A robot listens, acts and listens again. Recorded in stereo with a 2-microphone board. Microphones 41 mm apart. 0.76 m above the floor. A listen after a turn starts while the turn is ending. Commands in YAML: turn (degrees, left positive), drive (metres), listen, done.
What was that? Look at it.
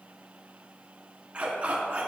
turn: -30
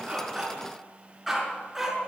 done: "Found it: a dog barking, straight ahead."